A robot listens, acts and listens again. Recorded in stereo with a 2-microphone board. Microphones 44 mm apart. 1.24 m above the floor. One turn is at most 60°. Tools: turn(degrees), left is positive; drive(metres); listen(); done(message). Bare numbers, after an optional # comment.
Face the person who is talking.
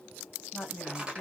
# The woman speaking: about 30° left or 150° left.
turn(30)
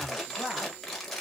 listen()
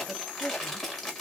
listen()
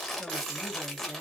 done("I heard a woman speaking, but can't make it out now. It was about straight ahead or 120° left.")